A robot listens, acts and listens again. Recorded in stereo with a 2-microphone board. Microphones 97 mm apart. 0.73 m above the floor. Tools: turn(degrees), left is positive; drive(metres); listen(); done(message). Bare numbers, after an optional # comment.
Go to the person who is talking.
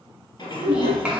turn(-30)
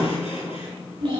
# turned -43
# So it is at 125° right.
turn(-125)
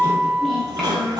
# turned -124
drive(1.0)
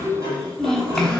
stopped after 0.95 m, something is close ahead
done("I am next to the child speaking.")